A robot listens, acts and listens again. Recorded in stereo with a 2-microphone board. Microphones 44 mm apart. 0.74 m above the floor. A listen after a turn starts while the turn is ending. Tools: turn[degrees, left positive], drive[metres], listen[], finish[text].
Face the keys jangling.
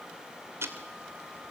Action: listen[]
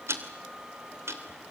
Action: listen[]
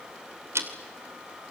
Action: finish[I can't make out keys jangling to turn to.]